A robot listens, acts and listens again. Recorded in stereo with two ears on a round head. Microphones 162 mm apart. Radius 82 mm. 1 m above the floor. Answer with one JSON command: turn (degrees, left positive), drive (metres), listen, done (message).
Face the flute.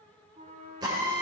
{"turn": -35}
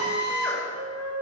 {"turn": -105}
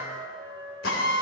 {"turn": -25}
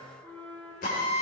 {"done": "Facing the flute, 1 to 2 m away."}